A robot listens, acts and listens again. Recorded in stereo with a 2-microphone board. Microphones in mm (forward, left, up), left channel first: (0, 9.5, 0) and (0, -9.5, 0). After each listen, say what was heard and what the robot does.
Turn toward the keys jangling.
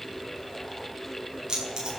The keys jangling: about 40° right or 140° right. Turn 40° right.
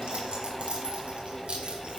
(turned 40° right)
So it is at 100° right. Turn 100° right.
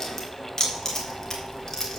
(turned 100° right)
The keys jangling is now 25° left. Turn 25° left.
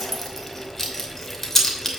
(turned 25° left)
The keys jangling is now 15° left. Turn 15° left.
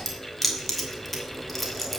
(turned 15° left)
Facing the keys jangling, 2 to 4 m away.